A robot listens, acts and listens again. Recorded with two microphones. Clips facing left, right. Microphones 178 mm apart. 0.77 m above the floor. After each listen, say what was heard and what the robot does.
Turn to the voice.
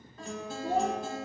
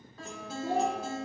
Turn 90° right.
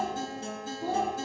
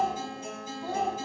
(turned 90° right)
So it is at 25° left. Turn 25° left.
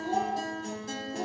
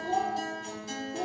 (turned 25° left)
Facing the child speaking.